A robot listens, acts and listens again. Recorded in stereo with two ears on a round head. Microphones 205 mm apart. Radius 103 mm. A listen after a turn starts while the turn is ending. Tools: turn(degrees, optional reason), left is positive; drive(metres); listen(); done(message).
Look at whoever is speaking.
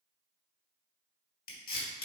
listen()
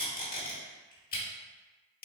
listen()
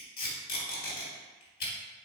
done("I can't make out anyone speaking to turn to.")